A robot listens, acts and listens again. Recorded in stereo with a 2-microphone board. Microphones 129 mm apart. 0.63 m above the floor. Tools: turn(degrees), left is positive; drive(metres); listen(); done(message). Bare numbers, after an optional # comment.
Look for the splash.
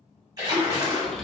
# The splash: about 30° right or 150° right.
turn(-30)
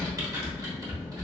listen()
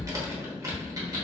done("I heard a splash, but can't make it out now. It was about straight ahead or 120° right.")